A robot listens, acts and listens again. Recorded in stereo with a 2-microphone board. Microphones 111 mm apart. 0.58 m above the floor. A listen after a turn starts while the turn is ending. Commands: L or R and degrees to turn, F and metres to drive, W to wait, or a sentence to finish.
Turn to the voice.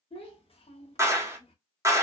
L55
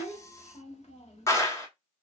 L70
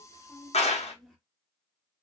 Found it: a child speaking, straight ahead.